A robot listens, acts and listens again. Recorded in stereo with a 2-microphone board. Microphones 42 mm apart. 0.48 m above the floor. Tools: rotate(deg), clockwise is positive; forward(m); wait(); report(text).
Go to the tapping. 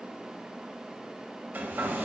wait()
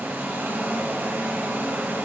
wait()
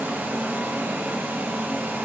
report("I can't make out tapping to turn to.")